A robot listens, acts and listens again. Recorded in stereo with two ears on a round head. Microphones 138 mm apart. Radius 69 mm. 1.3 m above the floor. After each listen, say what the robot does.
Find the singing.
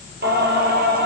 Turn 70° right.
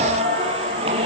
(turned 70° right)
Turn 35° right.
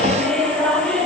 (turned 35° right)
Facing the singing, over 4 m away.